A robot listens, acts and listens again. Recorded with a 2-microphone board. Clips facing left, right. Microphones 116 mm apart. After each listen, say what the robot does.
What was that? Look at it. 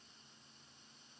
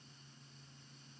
Keep listening.
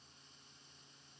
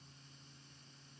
Keep listening.
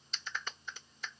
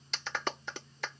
Turn 90° right.
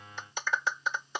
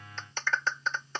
Turn 15° left.
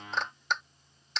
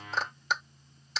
Found it: a clap, straight ahead.